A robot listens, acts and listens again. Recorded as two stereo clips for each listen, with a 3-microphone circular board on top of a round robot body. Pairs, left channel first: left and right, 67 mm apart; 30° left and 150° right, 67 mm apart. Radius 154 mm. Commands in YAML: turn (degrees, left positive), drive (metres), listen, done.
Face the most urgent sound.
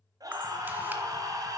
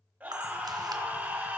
turn: -85
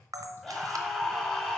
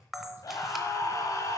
done: "Found it: a scream, straight ahead."